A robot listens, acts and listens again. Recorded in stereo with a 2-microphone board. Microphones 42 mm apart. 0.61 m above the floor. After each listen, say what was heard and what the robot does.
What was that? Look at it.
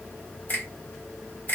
The finger snap: about 40° left or 140° left. Turn 40° left.
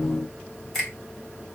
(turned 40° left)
Facing the finger snap, 1 to 2 m away.